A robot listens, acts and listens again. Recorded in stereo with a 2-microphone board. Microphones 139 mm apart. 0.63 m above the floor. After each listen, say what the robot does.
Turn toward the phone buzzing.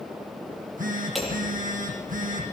Turn 70° right.
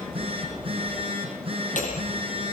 Turn 40° right.
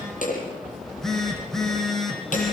Found it: a phone buzzing, straight ahead, over 4 m away.